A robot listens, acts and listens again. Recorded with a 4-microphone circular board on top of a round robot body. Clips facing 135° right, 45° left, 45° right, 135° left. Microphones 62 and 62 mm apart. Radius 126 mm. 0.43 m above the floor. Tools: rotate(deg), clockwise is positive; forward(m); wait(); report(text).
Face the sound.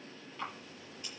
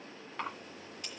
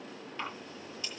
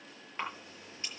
rotate(-70)
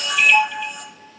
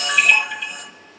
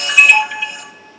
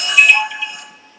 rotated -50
rotate(-20)
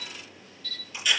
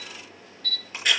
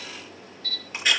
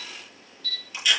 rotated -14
report("Facing the camera shutter, over 4 m away.")